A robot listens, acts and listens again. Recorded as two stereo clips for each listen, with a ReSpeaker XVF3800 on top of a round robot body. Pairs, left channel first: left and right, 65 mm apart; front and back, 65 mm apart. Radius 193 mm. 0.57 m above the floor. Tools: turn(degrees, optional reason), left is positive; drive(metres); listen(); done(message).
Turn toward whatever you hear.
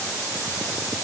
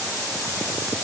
listen()
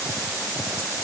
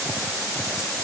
listen()
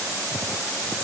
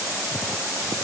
done("I can't make out anything to turn to.")